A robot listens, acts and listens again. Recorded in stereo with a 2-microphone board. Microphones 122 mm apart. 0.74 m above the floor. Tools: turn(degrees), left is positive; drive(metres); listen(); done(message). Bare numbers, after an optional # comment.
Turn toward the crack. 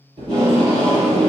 listen()
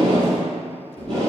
listen()
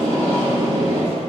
done("I can't make out a crack, only tape being pulled.")